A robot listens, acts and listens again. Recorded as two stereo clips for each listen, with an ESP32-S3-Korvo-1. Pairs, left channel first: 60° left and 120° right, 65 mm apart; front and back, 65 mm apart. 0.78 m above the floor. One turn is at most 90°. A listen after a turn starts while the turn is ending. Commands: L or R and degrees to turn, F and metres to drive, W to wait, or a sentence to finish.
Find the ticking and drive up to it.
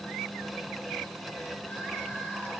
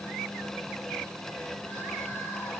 W
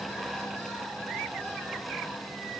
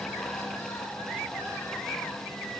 W
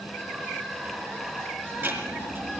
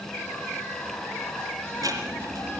R90
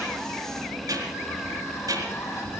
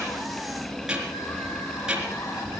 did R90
R90
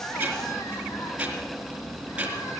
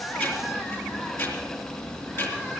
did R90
R50
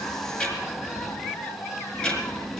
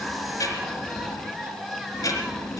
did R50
R10
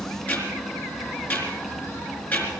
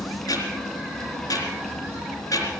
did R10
F1.0
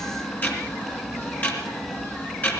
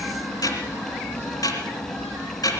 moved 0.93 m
F1.0
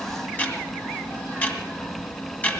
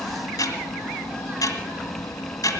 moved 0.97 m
F1.0
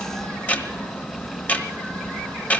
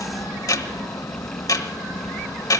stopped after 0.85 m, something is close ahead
I am next to the ticking.